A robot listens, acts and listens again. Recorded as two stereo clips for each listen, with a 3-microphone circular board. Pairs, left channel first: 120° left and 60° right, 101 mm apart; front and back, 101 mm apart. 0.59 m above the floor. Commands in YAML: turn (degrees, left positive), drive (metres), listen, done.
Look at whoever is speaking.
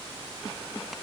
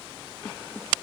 listen: true
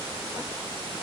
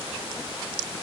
listen: true
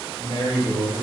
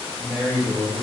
turn: 95
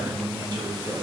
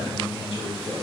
turn: -20
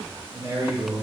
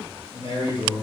done: "Facing the man speaking."